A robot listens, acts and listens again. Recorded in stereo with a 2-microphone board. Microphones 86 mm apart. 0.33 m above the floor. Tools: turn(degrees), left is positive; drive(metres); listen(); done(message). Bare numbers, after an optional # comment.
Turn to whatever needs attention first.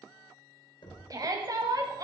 # The shout: about 40° right or 140° right.
turn(-40)
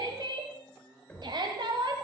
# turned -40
# So it is at 85° right.
turn(-85)
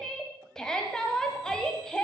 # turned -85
# The shout is now 10° left.
turn(10)
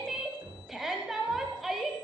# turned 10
done("Facing the shout, 1 to 2 m away.")